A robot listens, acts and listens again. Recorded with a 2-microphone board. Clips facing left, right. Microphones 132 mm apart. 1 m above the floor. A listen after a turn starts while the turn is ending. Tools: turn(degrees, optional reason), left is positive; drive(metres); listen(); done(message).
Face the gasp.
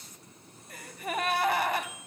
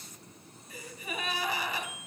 turn(degrees=60, reason="The gasp: about 60° left or 120° left.")
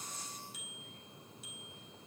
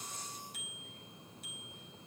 listen()
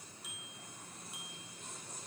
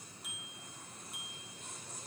done("I heard a gasp, but can't make it out now. It was about straight ahead or 60° left.")